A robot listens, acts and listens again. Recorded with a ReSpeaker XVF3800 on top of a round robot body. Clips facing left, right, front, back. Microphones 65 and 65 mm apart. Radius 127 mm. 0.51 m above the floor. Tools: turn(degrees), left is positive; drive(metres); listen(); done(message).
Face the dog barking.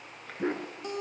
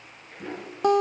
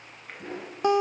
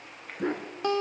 turn(degrees=140)
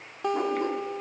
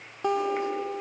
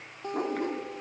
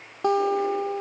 listen()
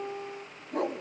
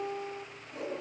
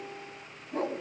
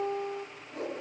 turn(degrees=60)
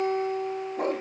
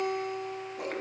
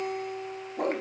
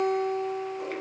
turn(degrees=45)
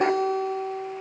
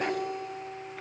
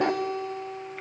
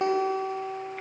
listen()
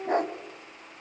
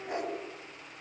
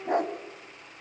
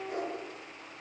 turn(degrees=45)
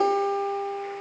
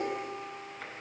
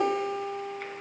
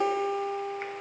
listen()
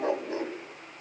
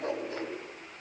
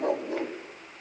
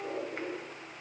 turn(degrees=20)
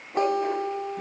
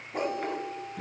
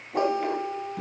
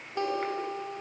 done("Facing the dog barking.")